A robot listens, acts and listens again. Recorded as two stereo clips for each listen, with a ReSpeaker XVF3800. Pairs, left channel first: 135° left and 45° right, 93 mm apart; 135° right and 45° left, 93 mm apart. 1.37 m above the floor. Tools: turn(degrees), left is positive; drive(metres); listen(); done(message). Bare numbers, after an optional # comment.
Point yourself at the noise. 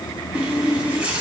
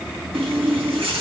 # The running tap: 30° left.
turn(30)
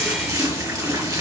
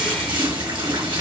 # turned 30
# The running tap is now 10° left.
turn(10)
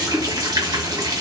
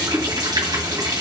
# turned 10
done("Found it: a running tap, straight ahead.")